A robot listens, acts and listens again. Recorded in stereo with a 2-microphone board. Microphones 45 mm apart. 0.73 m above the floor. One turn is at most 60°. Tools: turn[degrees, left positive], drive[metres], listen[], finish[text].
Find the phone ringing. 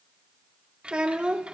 Action: listen[]
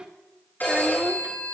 Thought: The phone ringing: about 45° left or 135° left.
Action: turn[45]
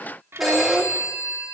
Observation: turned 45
Action: finish[Found it: a phone ringing, straight ahead, over 4 m away.]